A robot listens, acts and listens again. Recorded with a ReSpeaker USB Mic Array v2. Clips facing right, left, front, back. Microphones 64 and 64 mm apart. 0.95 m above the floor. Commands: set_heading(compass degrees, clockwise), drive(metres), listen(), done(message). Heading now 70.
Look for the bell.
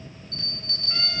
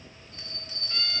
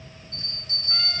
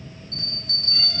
set_heading(260)
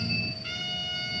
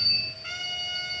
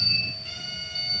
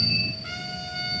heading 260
done("Facing the bell.")